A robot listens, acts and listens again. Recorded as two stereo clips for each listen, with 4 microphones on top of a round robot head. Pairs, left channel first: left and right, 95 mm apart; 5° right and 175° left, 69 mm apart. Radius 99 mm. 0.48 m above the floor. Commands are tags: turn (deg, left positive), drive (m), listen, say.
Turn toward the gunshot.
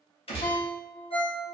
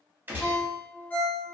<turn deg="115"/>
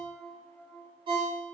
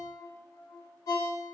<say>Facing where the gunshot came from. I can't hear it now.</say>